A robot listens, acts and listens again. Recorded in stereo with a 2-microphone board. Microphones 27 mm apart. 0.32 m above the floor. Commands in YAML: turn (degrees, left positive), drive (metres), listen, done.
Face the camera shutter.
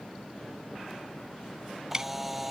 turn: -30
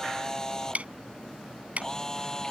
turn: 20
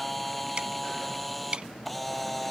done: "Facing the camera shutter."